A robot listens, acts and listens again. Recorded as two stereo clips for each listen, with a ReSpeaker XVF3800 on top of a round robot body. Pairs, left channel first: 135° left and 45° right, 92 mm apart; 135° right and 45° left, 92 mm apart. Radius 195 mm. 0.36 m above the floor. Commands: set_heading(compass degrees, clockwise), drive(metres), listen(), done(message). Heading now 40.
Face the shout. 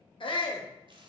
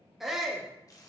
set_heading(270)
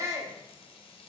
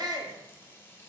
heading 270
set_heading(260)
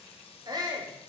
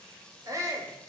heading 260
done("Facing the shout.")